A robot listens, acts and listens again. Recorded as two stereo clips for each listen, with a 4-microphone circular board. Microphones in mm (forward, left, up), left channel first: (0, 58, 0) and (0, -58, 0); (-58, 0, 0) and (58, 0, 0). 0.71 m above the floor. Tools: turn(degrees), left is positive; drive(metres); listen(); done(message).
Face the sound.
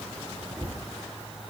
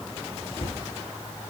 turn(degrees=-145)
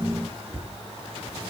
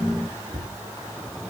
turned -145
turn(degrees=-20)
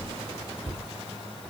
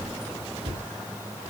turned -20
done("Found it: a cupboard door, straight ahead, 2 to 4 m away.")